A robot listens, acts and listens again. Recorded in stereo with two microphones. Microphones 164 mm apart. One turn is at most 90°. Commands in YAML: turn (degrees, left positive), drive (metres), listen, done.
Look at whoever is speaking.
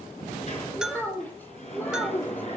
turn: 30
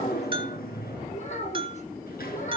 turn: 90
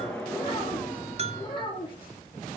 turn: 30
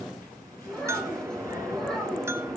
done: "Facing the child speaking."